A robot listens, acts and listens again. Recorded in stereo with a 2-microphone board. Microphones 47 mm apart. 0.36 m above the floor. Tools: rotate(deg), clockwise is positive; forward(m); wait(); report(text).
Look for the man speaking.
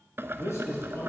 rotate(-90)
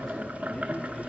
report("Facing the man speaking.")